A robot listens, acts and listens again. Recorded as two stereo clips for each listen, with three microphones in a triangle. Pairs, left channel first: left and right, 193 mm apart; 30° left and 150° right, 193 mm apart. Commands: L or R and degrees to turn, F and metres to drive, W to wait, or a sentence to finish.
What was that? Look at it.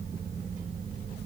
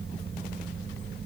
W
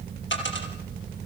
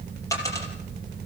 L105
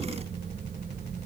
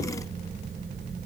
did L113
R10
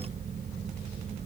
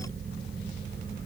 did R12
Facing where the dropped coin came from. I can't hear it now.